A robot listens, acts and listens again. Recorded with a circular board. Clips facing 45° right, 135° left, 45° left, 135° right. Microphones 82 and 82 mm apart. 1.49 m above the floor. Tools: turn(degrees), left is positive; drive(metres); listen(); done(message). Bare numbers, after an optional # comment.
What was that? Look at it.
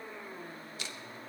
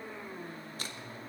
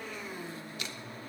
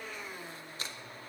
# The crumpling: 175° left.
turn(175)
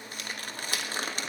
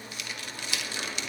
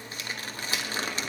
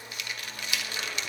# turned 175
# The crumpling is now 10° right.
turn(-10)
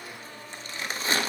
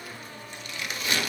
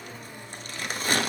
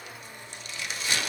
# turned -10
done("Found it: crumpling, straight ahead, 1 to 2 m away.")